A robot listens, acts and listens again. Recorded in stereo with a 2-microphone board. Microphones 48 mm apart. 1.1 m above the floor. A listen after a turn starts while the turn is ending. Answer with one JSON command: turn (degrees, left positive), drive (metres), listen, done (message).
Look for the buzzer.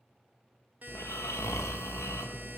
{"turn": -40}
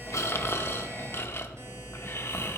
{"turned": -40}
{"listen": true}
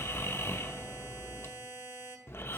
{"turn": -95}
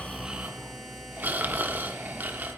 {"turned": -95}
{"listen": true}
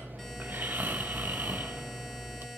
{"listen": true}
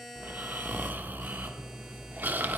{"done": "Found it: a buzzer, straight ahead, 1 to 2 m away."}